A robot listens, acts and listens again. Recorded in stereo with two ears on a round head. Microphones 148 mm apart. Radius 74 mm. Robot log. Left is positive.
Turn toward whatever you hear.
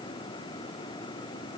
cmd idle
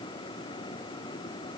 cmd idle
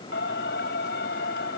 note: The singing: about 75° left or 105° left.
cmd yaw +75
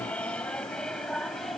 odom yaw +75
end: Facing the singing.